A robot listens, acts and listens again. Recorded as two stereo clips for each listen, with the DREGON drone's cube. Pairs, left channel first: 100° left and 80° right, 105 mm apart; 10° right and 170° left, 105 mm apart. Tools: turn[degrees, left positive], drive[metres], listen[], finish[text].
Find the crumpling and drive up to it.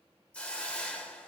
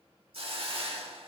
Action: listen[]
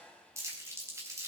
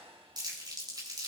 Thought: The crumpling: 140° right.
Action: turn[-140]
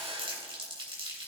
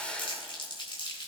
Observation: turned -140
Thought: The crumpling is now 45° right.
Action: turn[-45]
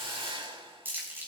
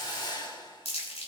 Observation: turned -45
Thought: The crumpling is now 10° right.
Action: turn[-10]
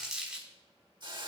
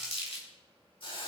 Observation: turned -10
Action: drive[1.0]
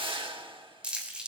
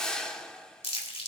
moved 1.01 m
Action: drive[1.0]
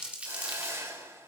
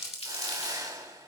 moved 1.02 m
Action: drive[1.0]
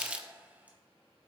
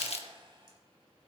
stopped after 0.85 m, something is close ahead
Action: finish[I am next to the crumpling.]